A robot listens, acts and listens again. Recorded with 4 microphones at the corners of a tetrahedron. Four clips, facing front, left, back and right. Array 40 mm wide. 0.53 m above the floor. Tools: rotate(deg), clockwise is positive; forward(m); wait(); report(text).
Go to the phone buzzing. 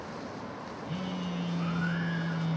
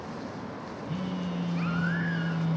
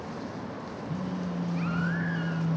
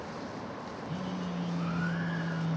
rotate(-30)
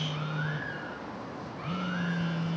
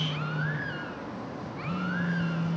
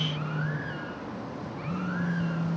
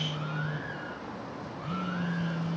forward(1.0)
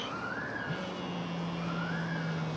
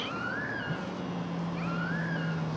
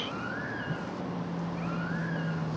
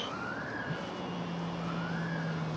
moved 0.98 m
forward(1.0)
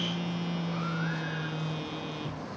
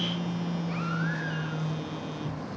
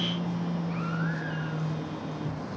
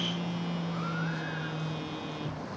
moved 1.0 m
rotate(15)
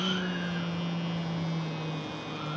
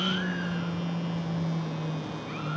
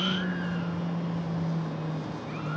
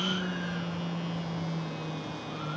forward(1.0)
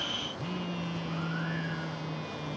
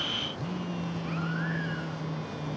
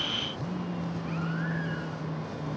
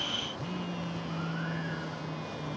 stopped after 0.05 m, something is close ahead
report("Arrived at the phone buzzing, straight ahead.")